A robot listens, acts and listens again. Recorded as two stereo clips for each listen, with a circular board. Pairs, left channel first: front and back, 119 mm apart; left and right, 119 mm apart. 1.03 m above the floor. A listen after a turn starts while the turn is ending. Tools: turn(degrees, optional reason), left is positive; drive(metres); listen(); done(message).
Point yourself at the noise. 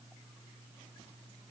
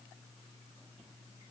listen()
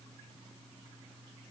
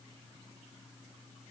listen()
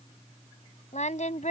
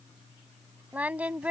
turn(degrees=-10, reason="The singing: 10° right.")
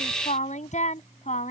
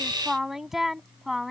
done("Facing the singing.")